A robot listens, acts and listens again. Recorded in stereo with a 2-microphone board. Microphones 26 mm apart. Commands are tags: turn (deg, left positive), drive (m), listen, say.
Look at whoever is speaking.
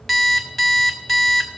<listen/>
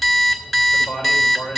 <turn deg="55"/>
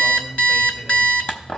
<listen/>
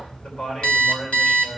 <turn deg="65"/>
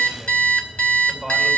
<say>Found it: a man speaking, straight ahead.</say>